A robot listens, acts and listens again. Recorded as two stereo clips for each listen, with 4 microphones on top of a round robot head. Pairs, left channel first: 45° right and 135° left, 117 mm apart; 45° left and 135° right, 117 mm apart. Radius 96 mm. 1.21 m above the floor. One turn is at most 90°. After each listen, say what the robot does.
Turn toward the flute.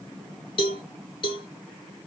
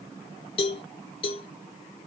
Keep listening.
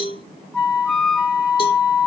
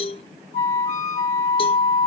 Turn 35° left.
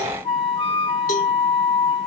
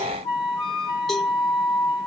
Turn 10° right.
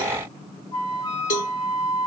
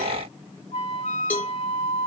Found it: a flute, straight ahead.